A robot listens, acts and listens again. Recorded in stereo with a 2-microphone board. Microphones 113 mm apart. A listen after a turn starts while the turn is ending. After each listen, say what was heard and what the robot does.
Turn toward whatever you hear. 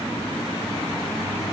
Keep listening.
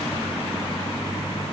Keep listening.
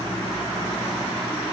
I can't make out anything.